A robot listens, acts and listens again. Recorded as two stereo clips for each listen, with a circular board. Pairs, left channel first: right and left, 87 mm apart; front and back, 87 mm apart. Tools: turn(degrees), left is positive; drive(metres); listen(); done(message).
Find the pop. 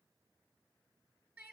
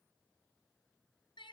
listen()
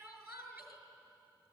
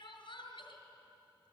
listen()
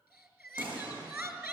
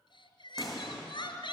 turn(degrees=90)
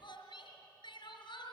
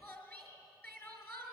done("Facing where the pop came from. I can't hear it now.")